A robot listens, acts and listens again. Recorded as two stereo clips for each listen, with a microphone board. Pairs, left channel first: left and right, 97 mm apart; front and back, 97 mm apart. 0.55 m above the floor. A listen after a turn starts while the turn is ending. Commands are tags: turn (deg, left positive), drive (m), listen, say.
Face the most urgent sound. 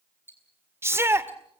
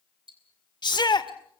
<turn deg="-30"/>
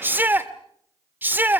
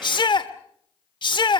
<turn deg="-25"/>
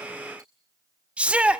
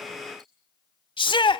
<turn deg="-15"/>
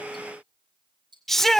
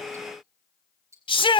<say>Found it: a shout, straight ahead.</say>